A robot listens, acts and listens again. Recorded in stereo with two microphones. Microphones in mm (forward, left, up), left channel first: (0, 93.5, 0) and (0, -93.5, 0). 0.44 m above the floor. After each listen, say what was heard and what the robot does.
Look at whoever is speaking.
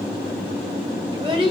The child speaking: about 30° right or 150° right. Turn 30° right.
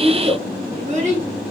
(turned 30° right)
The child speaking: about 40° right or 140° right. Turn 40° right.
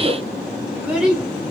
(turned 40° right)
Found it: a child speaking, straight ahead.